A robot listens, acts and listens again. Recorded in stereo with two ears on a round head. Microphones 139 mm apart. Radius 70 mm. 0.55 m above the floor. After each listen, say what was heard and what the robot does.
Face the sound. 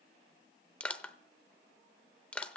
Turn 30° left.
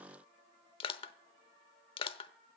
So it is at 145° left. Turn 145° left.
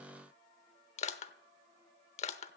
The crushing is now 45° left. Turn 45° left.
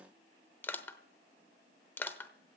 The crushing is now 15° left. Turn 15° left.
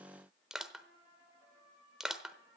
Found it: crushing, straight ahead, under 1 m away.